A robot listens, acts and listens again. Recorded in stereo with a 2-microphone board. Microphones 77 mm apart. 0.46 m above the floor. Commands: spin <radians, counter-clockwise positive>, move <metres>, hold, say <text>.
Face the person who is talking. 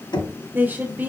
spin -0.44
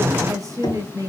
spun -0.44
spin -2.18
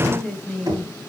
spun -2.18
say Found it: a woman speaking, straight ahead.